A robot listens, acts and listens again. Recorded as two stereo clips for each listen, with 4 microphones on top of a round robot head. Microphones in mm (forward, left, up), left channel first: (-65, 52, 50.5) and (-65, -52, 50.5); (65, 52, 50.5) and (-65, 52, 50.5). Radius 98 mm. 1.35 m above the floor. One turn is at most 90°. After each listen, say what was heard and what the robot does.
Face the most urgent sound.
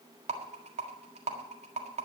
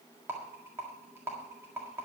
Keep listening.
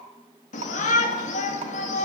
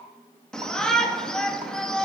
The shout: 85° left. Turn 85° left.
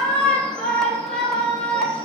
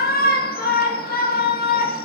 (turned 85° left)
Found it: a shout, straight ahead, 1 to 2 m away.